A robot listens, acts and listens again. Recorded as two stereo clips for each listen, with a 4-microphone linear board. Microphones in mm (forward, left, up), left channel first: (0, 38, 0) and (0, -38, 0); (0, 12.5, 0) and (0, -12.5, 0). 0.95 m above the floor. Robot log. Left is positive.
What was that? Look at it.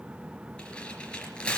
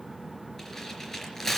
note: The tearing paper: about 15° left or 165° left.
cmd yaw +15
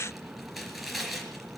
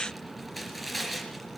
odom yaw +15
end: Facing the tearing paper, 2 to 4 m away.